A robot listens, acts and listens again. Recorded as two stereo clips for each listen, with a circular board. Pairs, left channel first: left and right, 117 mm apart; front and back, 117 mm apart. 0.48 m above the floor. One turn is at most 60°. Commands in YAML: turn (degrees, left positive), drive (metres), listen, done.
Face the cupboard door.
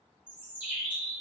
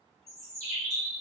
listen: true
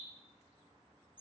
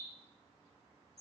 listen: true
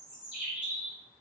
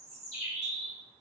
done: "I can't make out a cupboard door to turn to."